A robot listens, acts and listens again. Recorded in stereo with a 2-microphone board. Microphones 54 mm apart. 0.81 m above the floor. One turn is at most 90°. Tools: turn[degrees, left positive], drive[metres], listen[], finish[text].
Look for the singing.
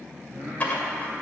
Thought: The singing: about 15° right or 165° right.
Action: turn[-15]
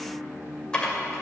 Thought: The singing: about 35° right or 145° right.
Action: turn[-35]
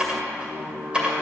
Thought: So it is at 105° right.
Action: turn[-90]
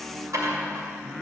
Action: finish[Facing the singing.]